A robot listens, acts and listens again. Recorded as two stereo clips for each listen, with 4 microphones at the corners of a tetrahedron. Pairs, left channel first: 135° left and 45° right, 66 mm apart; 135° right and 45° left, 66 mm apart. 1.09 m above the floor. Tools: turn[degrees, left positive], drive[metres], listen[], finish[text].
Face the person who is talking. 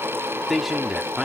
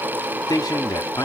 Thought: The man speaking: 125° right.
Action: turn[-125]
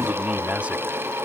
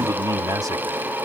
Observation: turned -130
Action: listen[]
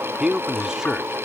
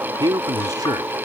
Thought: The man speaking is now 35° left.
Action: turn[35]
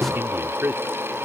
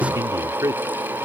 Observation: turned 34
Thought: The man speaking is now 10° left.
Action: turn[10]
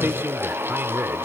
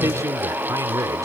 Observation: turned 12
Action: listen[]
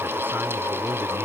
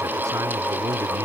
Action: listen[]
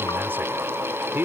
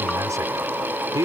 Thought: The man speaking is now 10° left.
Action: turn[10]
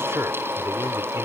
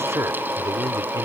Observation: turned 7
Action: finish[Found it: a man speaking, straight ahead.]